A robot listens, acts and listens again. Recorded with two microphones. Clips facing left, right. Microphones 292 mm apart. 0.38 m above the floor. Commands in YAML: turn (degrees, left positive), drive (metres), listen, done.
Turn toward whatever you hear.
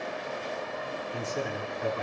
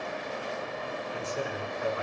turn: 50
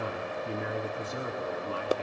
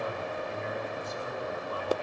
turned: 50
turn: 80
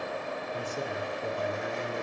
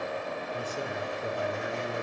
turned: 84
done: "Facing the man speaking."